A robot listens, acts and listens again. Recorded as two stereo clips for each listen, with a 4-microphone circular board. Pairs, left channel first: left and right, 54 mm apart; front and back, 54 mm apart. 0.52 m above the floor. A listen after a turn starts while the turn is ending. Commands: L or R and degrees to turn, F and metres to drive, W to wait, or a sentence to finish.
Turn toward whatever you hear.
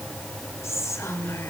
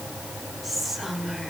L95
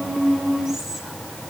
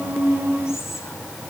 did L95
W
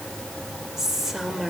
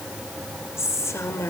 R10
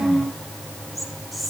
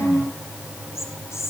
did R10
Facing the whispering, 2 to 4 m away.